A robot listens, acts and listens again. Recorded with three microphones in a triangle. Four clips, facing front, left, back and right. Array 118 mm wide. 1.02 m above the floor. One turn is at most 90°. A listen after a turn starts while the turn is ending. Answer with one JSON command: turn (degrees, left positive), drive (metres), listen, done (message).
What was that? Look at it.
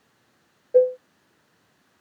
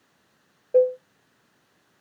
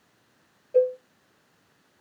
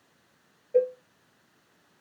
{"turn": 70}
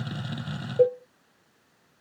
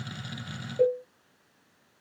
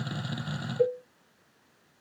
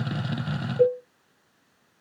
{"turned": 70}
{"done": "Facing the cowbell, under 1 m away."}